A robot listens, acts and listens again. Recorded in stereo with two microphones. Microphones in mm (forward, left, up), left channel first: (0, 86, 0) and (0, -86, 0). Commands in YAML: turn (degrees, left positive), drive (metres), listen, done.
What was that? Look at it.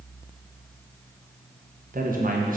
turn: -55
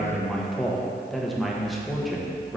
done: "Facing the man speaking, under 1 m away."